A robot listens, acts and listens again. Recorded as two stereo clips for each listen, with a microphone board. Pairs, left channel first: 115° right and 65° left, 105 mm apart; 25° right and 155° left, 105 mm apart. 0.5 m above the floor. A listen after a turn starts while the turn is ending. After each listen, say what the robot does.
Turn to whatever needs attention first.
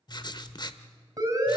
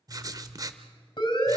Turn 15° left.
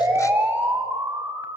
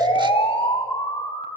Facing the siren.